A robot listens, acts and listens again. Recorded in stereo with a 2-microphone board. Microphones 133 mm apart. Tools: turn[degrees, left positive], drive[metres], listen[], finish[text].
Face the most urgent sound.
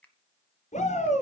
Thought: The shout: about 75° left or 105° left.
Action: turn[75]
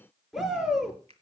Action: finish[Facing the shout, over 4 m away.]